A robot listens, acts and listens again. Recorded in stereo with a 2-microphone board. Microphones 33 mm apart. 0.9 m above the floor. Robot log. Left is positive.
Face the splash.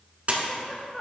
note: The splash: about 40° right or 140° right.
cmd yaw -40
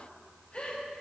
cmd idle
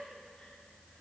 end: I heard a splash, but can't make it out now. It was about straight ahead or 100° right.